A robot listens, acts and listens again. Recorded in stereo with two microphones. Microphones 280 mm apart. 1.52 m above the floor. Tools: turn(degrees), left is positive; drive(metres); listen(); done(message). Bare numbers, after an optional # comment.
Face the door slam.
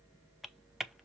listen()
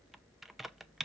listen()
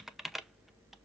done("I can't make out a door slam, only typing on a keyboard.")